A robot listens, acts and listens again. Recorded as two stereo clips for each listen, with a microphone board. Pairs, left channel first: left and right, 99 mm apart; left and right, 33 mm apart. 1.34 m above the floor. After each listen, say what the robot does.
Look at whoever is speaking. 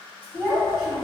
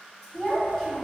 Turn 30° right.
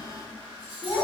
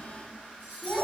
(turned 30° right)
Turn 140° right.
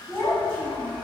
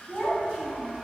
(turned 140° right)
Turn 25° left.
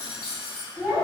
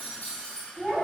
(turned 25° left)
Turn 10° right.
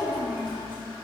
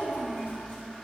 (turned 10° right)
Found it: a child speaking, straight ahead.